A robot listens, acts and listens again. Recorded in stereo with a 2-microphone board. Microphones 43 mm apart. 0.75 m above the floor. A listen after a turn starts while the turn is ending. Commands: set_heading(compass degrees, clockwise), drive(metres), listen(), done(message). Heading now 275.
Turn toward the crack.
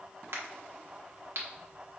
set_heading(350)
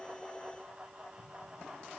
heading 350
listen()
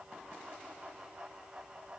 done("I heard a crack, but can't make it out now. It was about straight ahead or 30° right.")